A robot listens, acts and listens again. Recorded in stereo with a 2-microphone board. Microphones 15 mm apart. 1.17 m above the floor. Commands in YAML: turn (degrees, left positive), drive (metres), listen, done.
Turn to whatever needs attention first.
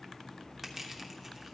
listen: true
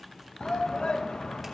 turn: 70
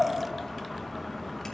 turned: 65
listen: true
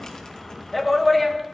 done: "Facing the shout, under 1 m away."